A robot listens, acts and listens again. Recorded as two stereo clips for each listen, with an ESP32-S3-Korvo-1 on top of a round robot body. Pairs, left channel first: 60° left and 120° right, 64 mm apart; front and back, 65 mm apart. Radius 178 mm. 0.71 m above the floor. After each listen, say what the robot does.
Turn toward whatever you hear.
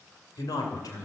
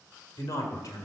Turn 30° left.
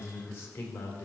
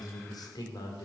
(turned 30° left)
Facing the man speaking.